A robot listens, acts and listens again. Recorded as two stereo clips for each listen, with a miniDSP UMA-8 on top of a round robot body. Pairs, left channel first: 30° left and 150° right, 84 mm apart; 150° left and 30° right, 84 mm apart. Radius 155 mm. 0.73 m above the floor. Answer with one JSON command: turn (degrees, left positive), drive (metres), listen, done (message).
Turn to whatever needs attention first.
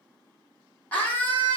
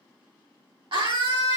{"turn": -40}
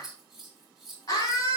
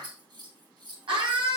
{"turn": -15}
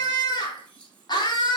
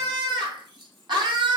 {"done": "Found it: a scream, straight ahead."}